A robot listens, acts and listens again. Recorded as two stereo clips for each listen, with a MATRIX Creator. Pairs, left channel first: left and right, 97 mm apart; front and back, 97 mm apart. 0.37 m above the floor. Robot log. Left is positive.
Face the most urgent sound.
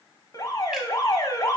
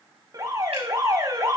note: The alarm: 135° left.
cmd yaw +135
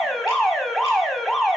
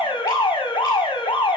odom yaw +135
end: Found it: an alarm, straight ahead.